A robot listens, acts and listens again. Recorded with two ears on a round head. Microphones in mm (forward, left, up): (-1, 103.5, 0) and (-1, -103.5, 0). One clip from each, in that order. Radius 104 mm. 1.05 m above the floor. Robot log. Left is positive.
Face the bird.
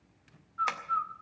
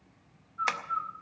note: The bird: about 30° left or 150° left.
cmd yaw +30
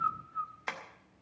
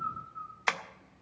note: So it is at 120° left.
cmd yaw +120
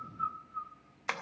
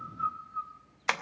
end: Found it: a bird, straight ahead.